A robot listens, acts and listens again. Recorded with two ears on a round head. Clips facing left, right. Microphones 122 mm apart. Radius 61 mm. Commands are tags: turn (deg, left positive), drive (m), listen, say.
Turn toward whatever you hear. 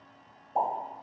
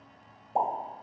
<turn deg="-30"/>
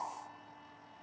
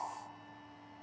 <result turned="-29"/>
<listen/>
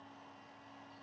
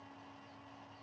<say>I heard a pop, but can't make it out now. It was about straight ahead or 125° right.</say>